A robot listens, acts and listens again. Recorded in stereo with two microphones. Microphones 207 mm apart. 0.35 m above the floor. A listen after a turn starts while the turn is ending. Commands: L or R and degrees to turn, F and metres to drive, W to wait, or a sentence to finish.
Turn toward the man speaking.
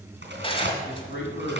L65
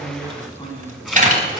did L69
L20
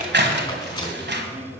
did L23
W
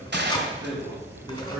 R10
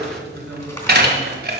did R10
Found it: a man speaking, straight ahead, over 4 m away.